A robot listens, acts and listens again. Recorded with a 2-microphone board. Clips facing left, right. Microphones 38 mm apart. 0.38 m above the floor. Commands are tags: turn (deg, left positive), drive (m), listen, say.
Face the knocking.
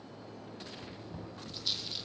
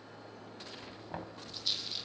<turn deg="-65"/>
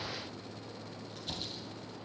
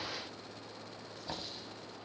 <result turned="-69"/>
<turn deg="-30"/>
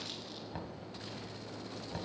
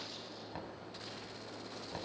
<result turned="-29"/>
<say>Facing the knocking, 2 to 4 m away.</say>